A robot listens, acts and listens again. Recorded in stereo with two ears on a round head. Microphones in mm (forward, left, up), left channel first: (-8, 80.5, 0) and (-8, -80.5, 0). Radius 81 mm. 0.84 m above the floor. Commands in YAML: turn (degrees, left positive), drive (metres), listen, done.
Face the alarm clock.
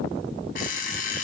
turn: 50
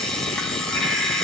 done: "Facing the alarm clock."